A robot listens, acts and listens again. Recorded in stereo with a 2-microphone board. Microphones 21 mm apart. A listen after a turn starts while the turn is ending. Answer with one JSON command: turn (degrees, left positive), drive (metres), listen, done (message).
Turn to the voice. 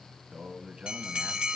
{"turn": -65}
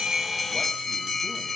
{"listen": true}
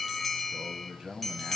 {"turn": -35}
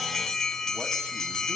{"listen": true}
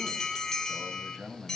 {"turn": -15}
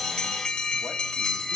{"listen": true}
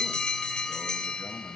{"listen": true}
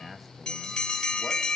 {"done": "Found it: a man speaking, straight ahead, 2 to 4 m away."}